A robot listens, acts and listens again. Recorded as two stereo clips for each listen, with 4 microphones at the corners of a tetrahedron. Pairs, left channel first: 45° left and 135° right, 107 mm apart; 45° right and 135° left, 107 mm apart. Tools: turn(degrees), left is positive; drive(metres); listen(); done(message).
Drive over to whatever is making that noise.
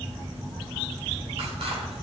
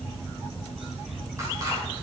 listen()
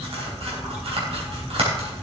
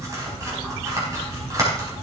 turn(degrees=-165)
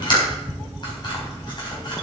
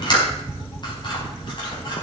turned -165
drive(metres=1.0)
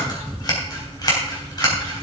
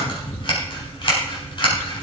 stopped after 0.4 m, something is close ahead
done("Blocked. The scissors is further on, straight ahead.")